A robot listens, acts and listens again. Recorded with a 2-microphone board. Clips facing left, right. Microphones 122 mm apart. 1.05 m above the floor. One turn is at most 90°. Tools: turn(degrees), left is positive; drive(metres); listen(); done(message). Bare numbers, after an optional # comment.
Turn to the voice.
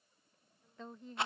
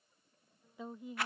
turn(-30)
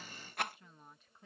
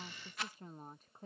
# So it is at 135° right.
turn(-90)
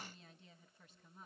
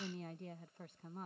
# The woman speaking is now 60° right.
turn(-60)
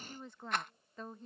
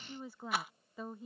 done("Found it: a woman speaking, straight ahead.")